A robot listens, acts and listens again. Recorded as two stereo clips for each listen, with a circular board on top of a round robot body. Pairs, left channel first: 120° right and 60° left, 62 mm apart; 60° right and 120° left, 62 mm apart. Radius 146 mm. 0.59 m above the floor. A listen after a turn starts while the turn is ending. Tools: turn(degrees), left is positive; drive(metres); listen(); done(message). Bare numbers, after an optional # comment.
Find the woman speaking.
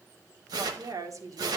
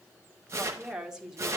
# The woman speaking: 40° left.
turn(40)
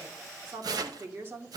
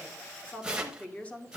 done("Facing the woman speaking, 2 to 4 m away.")